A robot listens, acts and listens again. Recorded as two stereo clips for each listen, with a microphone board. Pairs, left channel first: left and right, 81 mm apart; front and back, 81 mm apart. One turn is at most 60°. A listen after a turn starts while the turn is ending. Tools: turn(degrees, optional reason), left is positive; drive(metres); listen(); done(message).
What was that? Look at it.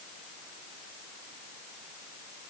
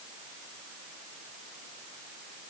listen()
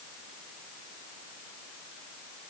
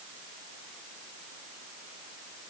listen()
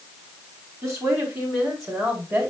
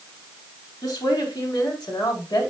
turn(degrees=-35, reason="The woman speaking: 35° right.")
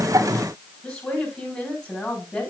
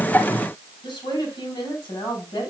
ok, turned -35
done("Facing the woman speaking, over 4 m away.")